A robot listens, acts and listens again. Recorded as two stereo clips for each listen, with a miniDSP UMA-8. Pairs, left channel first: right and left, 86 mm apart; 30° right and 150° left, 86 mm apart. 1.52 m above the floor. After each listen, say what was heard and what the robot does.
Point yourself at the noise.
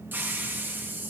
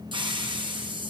The hiss: 155° left. Turn 155° left.
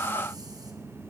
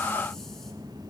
Keep listening.
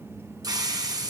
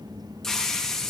The hiss is now 55° left. Turn 55° left.
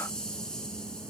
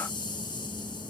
The hiss is now 10° right. Turn 10° right.
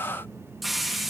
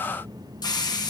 Found it: a hiss, straight ahead.